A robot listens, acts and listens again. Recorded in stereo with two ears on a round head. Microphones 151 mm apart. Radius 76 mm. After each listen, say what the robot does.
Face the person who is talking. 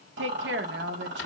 Turn 90° right.
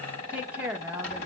Turn 10° right.
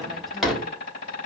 Keep listening.
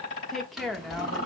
Found it: a woman speaking, straight ahead.